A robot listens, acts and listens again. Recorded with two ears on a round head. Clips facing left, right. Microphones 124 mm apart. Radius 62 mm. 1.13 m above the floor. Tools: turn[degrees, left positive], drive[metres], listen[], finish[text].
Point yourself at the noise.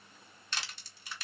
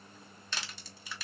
Thought: The crushing: about 70° right or 110° right.
Action: turn[-70]
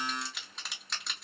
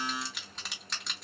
Action: finish[Found it: crushing, straight ahead, 1 to 2 m away.]